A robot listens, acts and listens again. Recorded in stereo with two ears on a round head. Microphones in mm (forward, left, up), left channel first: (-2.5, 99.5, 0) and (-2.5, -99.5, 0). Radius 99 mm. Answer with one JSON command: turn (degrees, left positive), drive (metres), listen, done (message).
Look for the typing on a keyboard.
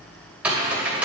{"turn": -30}
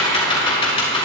{"turn": 30}
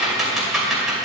{"done": "Facing the typing on a keyboard, 2 to 4 m away."}